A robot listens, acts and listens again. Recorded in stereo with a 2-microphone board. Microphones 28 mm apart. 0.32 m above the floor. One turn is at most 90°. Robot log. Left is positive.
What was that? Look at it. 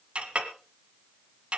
note: The clink: about 45° right or 135° right.
cmd yaw -45
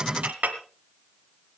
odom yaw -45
note: So it is at 80° right.
cmd yaw -80
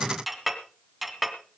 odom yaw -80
end: Found it: a clink, straight ahead, 1 to 2 m away.